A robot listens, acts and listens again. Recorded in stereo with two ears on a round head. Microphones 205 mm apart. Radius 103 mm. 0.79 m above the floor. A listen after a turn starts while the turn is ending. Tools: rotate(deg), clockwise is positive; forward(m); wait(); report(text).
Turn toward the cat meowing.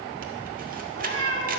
rotate(55)
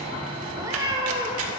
rotate(25)
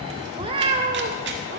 rotate(40)
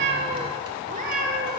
rotate(45)
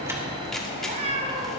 rotate(30)
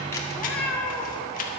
rotate(-10)
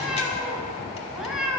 report("Facing the cat meowing.")